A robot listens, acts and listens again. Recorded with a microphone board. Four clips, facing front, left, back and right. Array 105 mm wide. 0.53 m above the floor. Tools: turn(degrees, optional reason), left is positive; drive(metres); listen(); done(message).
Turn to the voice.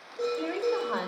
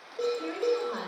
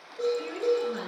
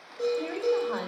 turn(degrees=-10, reason="The woman speaking: 10° right.")
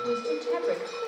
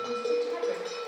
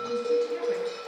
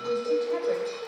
listen()
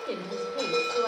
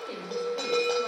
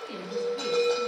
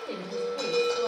done("Found it: a woman speaking, straight ahead.")